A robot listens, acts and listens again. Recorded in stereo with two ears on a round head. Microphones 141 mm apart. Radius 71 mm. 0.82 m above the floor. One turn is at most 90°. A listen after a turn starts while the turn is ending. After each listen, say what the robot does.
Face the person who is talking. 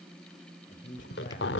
Turn 50° left.
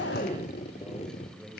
Found it: a man speaking, straight ahead, 2 to 4 m away.